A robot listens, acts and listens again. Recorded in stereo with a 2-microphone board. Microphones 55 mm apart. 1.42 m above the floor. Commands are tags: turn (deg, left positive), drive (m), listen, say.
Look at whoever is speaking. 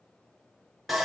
<listen/>
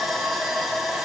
<listen/>
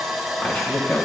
<turn deg="35"/>
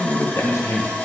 <turn deg="115"/>
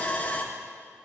<listen/>
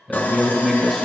<say>Facing the man speaking.</say>